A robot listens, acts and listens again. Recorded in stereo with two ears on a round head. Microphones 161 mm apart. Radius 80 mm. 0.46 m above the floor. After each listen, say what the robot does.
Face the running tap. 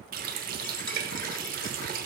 Turn 55° right.
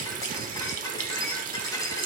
Turn 60° right.
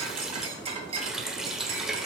Facing the running tap.